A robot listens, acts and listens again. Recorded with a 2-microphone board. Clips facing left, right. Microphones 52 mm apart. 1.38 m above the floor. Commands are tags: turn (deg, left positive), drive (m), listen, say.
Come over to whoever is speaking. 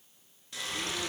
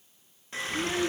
<turn deg="-65"/>
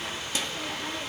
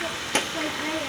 <turn deg="-50"/>
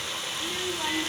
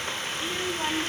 <turn deg="-10"/>
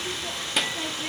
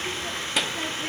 <drive m="1.0"/>
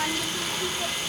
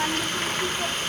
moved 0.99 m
<turn deg="-10"/>
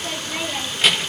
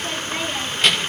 <drive m="1.0"/>
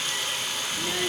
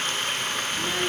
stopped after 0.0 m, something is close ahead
<say>I am next to the child speaking.</say>